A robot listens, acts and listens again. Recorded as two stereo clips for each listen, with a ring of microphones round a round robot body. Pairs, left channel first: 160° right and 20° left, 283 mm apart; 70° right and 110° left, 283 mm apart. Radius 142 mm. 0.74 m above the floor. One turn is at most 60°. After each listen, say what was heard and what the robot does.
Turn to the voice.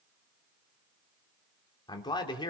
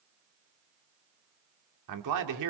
The man speaking: 130° left. Turn 60° left.
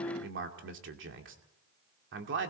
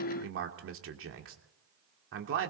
The man speaking is now 70° left. Turn 60° left.
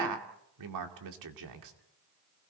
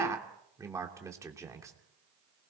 The man speaking is now 35° left. Turn 35° left.
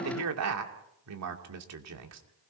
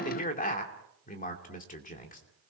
Found it: a man speaking, straight ahead, 2 to 4 m away.